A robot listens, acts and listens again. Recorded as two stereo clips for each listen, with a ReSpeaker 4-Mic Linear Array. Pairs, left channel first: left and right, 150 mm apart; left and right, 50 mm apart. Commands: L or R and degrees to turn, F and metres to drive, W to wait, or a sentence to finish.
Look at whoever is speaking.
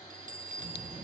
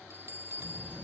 L60
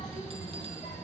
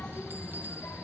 L65
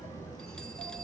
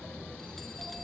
L20
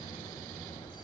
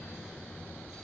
Facing the child speaking, over 4 m away.